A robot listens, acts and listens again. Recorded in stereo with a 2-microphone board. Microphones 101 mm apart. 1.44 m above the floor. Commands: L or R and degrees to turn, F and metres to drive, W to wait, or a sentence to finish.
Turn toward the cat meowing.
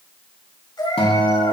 L45
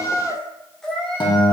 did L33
Found it: a cat meowing, straight ahead.